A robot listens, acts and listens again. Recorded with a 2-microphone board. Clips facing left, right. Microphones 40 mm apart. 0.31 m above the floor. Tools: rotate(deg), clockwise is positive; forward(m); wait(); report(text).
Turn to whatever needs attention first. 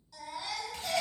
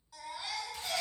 rotate(15)
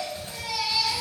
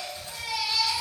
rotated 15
rotate(150)
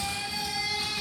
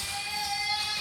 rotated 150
rotate(15)
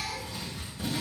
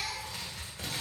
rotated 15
report("Facing the baby crying, 1 to 2 m away.")